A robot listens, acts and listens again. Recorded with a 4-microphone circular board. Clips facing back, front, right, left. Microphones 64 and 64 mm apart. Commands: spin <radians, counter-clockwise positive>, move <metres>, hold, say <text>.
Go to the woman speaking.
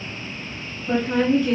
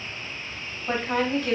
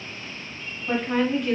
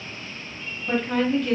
move 1.0
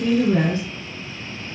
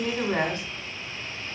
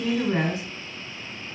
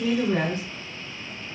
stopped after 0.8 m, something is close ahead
say Arrived at the woman speaking, straight ahead.